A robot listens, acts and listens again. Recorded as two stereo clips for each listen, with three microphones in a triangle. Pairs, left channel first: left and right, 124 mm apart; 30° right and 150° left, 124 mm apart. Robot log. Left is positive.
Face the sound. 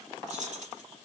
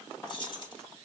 note: The keys jangling: 80° right.
cmd yaw -80
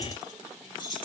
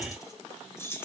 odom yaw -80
note: The keys jangling is now 40° left.
cmd yaw +40
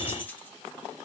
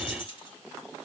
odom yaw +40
note: The keys jangling is now 15° left.
cmd yaw +15
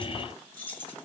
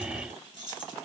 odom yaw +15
note: The keys jangling is now 20° left.
cmd yaw +20
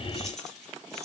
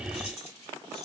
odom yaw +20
cmd idle
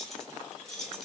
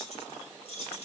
end: Found it: keys jangling, straight ahead, 2 to 4 m away.